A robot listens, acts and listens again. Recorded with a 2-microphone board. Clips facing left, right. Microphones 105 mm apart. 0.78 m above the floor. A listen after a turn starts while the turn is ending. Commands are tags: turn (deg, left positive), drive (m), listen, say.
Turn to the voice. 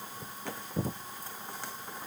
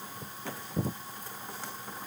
<listen/>
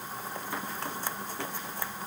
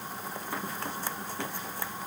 <listen/>
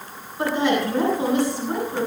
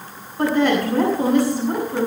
<turn deg="-55"/>
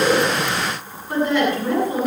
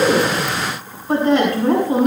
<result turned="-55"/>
<turn deg="-70"/>
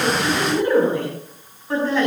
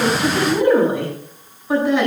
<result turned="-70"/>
<turn deg="-15"/>
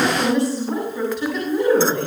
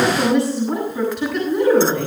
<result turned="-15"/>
<say>Facing the woman speaking.</say>